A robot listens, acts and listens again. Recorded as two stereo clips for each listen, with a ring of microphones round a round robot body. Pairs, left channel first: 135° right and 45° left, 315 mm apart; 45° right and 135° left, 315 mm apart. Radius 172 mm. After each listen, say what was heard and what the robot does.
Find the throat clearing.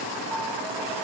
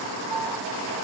Keep listening.
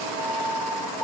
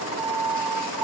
Keep listening.
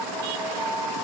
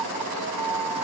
I can't make out throat clearing to turn to.